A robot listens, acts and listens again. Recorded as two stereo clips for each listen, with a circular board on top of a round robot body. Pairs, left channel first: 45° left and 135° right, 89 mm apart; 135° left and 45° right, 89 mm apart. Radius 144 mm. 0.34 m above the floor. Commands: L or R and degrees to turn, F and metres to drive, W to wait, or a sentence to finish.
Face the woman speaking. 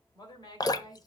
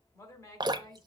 L85
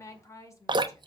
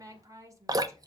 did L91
Found it: a woman speaking, straight ahead, 2 to 4 m away.